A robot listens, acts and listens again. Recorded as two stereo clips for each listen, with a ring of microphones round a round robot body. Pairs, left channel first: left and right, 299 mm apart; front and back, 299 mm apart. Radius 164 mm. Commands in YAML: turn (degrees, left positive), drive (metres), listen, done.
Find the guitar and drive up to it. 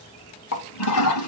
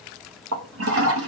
listen: true
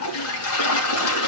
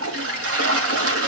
listen: true
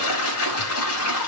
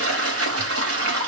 done: "I can't make out a guitar to turn to."